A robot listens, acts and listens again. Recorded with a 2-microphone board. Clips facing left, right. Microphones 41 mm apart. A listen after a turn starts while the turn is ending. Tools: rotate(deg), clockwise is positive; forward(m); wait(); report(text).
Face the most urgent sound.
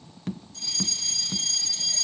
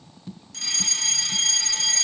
rotate(65)
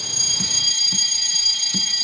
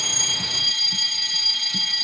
rotate(15)
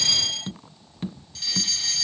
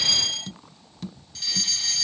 report("Found it: a fire alarm, straight ahead.")